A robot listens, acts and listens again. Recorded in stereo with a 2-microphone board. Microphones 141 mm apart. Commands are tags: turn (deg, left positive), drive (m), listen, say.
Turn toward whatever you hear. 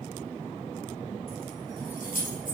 <turn deg="90"/>
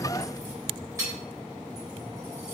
<turn deg="-25"/>
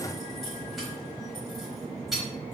<say>Facing the keys jangling.</say>